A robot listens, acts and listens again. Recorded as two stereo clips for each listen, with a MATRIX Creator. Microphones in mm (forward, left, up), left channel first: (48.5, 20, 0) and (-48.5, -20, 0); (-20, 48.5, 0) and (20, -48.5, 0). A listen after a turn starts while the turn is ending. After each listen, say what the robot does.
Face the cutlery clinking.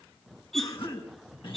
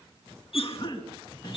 Turn 110° left.
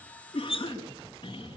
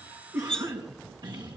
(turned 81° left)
Turn 30° left.
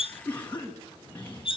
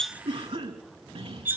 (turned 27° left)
Found it: cutlery clinking, straight ahead.